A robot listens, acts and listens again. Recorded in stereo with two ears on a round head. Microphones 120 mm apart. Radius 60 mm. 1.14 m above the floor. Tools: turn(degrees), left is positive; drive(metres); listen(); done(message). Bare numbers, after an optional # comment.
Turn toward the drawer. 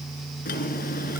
# The drawer: about 75° left or 105° left.
turn(75)
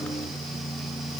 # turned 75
listen()
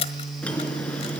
# So it is at 10° left.
turn(10)
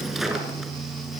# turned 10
done("Facing the drawer, 2 to 4 m away.")